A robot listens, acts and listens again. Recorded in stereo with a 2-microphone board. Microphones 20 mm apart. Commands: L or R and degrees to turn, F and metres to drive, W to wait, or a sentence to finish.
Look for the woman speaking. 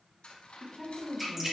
L30
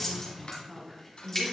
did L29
R35
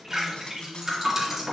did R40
W
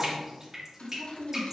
R15
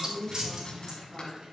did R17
Found it: a woman speaking, straight ahead.